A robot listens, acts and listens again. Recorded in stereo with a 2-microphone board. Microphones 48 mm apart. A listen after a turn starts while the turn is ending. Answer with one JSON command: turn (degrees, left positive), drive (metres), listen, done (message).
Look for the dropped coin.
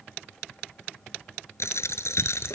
{"turn": 70}
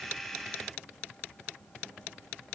{"listen": true}
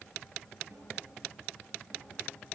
{"done": "I heard a dropped coin, but can't make it out now. It was about straight ahead or 40° left."}